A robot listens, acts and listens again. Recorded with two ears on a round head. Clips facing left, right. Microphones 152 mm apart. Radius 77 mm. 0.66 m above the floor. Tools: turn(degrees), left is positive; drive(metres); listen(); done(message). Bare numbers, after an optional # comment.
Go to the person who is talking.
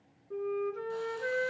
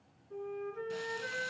listen()
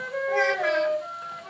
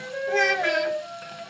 # The child speaking: about 30° right or 150° right.
turn(-30)
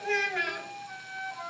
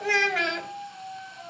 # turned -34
# So it is at 115° right.
turn(-115)
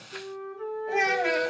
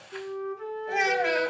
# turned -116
drive(1.0)
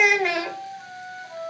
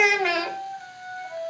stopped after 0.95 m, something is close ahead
done("Arrived at the child speaking, straight ahead.")